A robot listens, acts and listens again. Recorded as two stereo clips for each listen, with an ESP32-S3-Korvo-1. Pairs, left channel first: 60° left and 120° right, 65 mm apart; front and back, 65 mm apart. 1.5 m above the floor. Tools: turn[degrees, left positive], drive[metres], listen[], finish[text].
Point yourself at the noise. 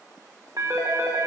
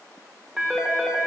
Thought: The phone ringing: 100° right.
Action: turn[-100]
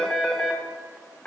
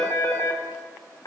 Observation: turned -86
Thought: The phone ringing is now 10° right.
Action: turn[-10]
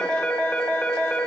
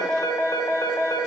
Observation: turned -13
Action: finish[Found it: a phone ringing, straight ahead, 1 to 2 m away.]